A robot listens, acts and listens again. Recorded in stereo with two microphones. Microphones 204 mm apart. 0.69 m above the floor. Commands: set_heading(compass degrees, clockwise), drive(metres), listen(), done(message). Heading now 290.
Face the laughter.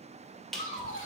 set_heading(255)
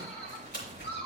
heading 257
set_heading(132)
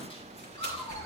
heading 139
listen()
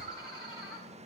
set_heading(114)
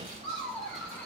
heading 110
set_heading(100)
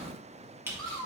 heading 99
done("Facing the laughter, 2 to 4 m away.")